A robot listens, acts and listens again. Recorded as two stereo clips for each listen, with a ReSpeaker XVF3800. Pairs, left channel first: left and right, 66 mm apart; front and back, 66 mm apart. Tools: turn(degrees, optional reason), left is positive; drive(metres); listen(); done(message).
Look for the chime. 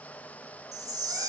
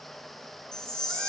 turn(degrees=-80, reason="The chime: 80° right.")
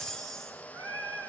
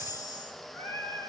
turn(degrees=10, reason="The chime is now 10° left.")
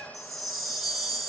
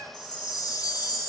done("Facing the chime.")